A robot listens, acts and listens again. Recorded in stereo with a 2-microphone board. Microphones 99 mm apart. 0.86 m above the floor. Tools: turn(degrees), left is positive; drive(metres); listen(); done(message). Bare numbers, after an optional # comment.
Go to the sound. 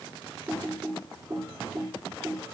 # The typing on a keyboard: about 35° right or 145° right.
turn(-35)
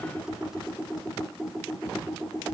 drive(1.0)
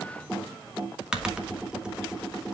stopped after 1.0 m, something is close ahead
# The typing on a keyboard is now 10° right.
turn(-10)
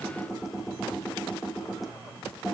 done("I am next to the typing on a keyboard.")